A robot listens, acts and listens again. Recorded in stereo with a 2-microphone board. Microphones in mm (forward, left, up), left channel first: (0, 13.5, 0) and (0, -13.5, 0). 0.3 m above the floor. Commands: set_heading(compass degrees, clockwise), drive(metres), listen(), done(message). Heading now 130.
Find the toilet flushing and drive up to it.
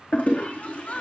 set_heading(40)
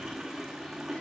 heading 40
set_heading(50)
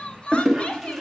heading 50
drive(1.0)
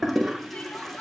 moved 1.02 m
drive(1.0)
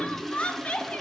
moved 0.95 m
set_heading(40)
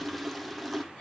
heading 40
drive(1.0)
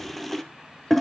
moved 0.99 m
drive(1.0)
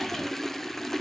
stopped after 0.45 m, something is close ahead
set_heading(30)
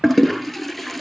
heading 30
done("I am next to the toilet flushing.")